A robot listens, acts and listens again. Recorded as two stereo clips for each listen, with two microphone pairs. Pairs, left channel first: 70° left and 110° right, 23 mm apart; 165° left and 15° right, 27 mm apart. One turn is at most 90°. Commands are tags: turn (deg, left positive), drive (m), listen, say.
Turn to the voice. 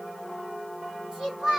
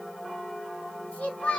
<turn deg="-90"/>
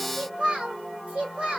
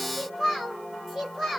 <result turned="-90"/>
<turn deg="-90"/>
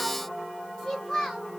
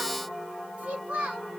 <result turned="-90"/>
<turn deg="15"/>
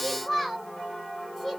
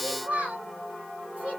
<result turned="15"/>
<say>Found it: a child speaking, straight ahead.</say>